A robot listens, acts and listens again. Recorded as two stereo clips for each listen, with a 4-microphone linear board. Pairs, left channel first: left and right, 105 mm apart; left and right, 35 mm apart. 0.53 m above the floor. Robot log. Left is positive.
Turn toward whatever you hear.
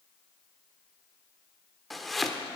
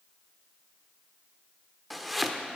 cmd yaw +30
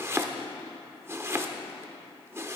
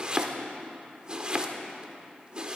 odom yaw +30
note: So it is at 30° right.
cmd yaw -30
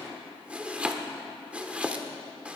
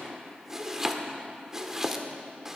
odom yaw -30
note: The chopping is now 15° right.
cmd yaw -15
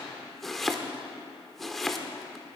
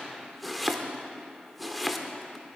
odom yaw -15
end: Facing the chopping, under 1 m away.